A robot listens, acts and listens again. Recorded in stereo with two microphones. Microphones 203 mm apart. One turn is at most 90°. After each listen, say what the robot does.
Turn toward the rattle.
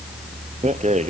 Turn 35° right.
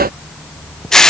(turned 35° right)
Found it: a rattle, straight ahead.